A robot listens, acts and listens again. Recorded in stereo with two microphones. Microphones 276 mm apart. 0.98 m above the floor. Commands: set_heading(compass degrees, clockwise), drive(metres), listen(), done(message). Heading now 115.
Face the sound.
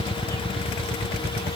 listen()
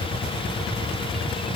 listen()
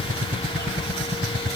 done("I can't make out anything to turn to.")